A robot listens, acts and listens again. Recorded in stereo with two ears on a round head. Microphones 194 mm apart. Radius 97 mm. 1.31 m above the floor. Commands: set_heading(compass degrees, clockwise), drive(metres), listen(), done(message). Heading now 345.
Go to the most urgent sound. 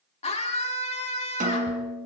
set_heading(315)
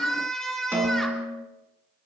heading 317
drive(1.0)
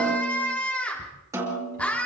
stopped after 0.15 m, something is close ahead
done("Something is in my way. I am facing the scream but have not reached it.")